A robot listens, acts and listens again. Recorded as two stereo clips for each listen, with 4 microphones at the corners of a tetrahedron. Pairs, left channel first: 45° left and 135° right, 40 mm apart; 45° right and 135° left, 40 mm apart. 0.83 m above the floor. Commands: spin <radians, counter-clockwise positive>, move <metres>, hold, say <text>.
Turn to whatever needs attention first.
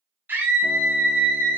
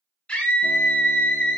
spin -1.83
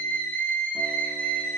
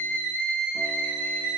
say Facing the scream, over 4 m away.